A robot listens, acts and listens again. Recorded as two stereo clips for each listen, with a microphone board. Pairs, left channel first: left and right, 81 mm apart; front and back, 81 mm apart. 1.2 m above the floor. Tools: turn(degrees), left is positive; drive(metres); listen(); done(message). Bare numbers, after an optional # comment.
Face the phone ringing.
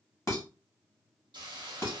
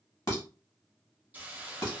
listen()
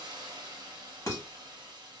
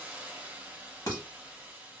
listen()
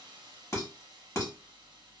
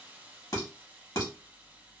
done("I can't make out a phone ringing to turn to.")